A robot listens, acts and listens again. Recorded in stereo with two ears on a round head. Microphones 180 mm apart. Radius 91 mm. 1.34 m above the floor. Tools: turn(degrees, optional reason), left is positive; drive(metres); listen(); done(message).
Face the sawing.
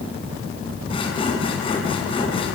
turn(degrees=25, reason="The sawing: about 25° left or 155° left.")
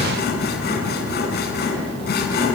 turn(degrees=125, reason="So it is at 125° left.")
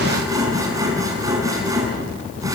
turn(degrees=-15, reason="The sawing is now 15° right.")
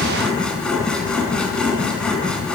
done("Found it: sawing, straight ahead, over 4 m away.")